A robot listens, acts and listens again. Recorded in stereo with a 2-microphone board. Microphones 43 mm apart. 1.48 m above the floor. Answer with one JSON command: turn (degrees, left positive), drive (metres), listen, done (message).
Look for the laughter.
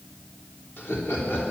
{"turn": 55}
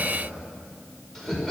{"done": "Facing the laughter."}